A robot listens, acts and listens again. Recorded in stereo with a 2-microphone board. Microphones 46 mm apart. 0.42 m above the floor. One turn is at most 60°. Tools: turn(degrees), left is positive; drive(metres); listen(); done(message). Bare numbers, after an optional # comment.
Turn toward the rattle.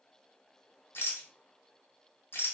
# The rattle: about 55° left or 125° left.
turn(55)
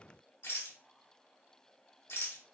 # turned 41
# So it is at 75° left.
turn(60)
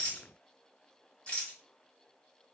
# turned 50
# The rattle is now 25° left.
turn(25)
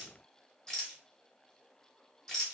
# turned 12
# The rattle is now 15° left.
turn(15)
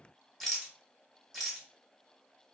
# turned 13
done("Found it: a rattle, straight ahead.")